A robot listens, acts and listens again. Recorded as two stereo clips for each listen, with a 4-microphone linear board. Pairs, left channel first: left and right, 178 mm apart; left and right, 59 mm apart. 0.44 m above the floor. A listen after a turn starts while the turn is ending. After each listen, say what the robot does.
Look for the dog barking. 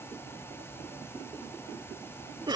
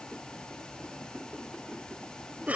Keep listening.
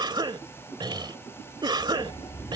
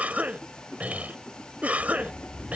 Turn 25° left.
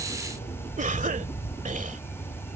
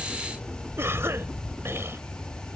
Turn 135° left.
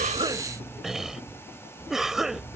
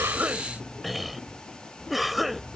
Turn 15° left.
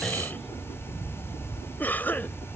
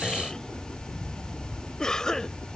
Facing the dog barking.